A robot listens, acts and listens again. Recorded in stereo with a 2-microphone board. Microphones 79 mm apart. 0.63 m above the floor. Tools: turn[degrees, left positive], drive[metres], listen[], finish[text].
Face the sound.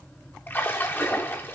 Thought: The splash: about 30° left or 150° left.
Action: turn[30]
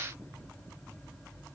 Action: listen[]
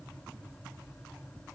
Action: finish[I heard a splash, but can't make it out now. It was about straight ahead or 120° left.]